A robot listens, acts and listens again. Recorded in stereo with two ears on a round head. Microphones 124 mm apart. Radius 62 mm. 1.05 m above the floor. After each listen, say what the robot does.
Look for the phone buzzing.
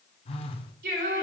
Turn 40° left.
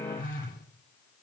Turn 95° left.
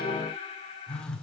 Found it: a phone buzzing, straight ahead, 1 to 2 m away.